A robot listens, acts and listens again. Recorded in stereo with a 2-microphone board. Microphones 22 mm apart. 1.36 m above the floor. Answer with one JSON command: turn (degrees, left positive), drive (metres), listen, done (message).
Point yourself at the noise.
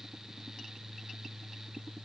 {"listen": true}
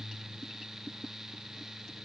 {"listen": true}
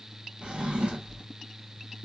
{"turn": -55}
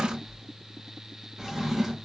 {"turn": -20}
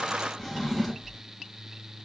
{"done": "Facing the drawer."}